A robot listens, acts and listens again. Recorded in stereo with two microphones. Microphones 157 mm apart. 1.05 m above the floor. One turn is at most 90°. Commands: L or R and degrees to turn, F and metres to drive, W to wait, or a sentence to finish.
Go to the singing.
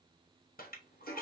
W
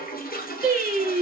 R90
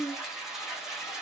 L10
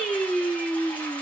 F1.0
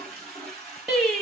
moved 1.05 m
F1.0
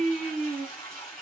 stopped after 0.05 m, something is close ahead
Arrived at the singing, straight ahead.